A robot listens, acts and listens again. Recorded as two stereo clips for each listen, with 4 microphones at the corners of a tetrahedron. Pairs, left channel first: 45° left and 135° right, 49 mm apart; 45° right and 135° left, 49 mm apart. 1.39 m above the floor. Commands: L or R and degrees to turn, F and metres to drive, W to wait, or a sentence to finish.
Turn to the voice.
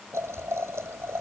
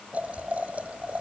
W
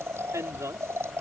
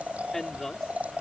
R130
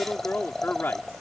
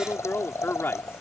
Found it: a woman speaking, straight ahead.